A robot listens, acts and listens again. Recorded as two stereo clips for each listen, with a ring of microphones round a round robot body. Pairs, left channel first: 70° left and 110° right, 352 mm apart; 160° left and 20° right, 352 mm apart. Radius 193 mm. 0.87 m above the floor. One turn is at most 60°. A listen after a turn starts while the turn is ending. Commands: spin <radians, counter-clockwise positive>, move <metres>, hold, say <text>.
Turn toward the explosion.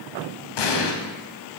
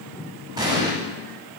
spin 0.96
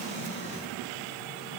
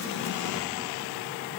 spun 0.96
say I heard an explosion from this way, but can't make it out now.